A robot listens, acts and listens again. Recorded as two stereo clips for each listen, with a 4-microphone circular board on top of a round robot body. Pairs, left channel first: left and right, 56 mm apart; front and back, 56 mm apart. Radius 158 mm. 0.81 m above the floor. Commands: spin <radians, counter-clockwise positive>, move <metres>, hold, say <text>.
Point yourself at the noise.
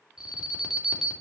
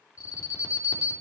spin -0.17
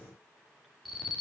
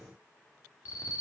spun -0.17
say Facing the alarm.